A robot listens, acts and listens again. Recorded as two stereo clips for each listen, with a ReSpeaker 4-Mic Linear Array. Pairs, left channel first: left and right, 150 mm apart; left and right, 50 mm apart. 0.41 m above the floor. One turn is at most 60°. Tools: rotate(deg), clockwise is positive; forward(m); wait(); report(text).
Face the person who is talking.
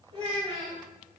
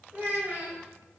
rotate(35)
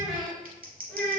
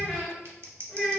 rotate(-10)
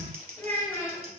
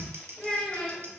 rotate(-20)
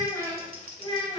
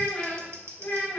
rotate(-40)
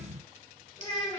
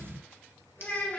rotate(-35)
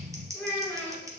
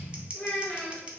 rotate(-15)
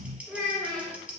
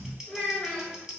report("Found it: a child speaking, straight ahead, 1 to 2 m away.")